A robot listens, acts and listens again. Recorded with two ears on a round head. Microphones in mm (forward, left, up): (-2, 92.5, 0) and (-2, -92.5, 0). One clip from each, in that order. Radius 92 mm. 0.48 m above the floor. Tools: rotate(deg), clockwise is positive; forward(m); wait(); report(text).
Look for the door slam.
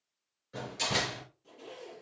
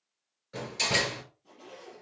rotate(30)
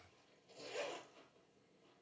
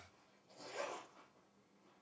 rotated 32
wait()
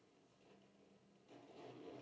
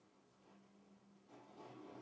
report("I heard a door slam, but can't make it out now. It was about 20° left or 135° right.")